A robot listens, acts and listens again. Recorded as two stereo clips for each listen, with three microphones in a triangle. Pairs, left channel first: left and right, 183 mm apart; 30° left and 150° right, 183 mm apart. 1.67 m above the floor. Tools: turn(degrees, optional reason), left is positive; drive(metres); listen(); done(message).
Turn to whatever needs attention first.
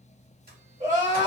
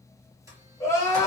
turn(degrees=-45, reason="The crying: 45° right.")
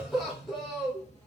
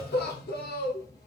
done("Facing the crying.")